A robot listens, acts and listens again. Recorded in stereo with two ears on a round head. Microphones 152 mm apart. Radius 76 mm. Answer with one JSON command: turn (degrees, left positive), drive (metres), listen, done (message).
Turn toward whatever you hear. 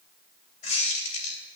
{"turn": 45}
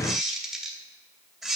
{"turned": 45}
{"done": "Facing the squeak, 2 to 4 m away."}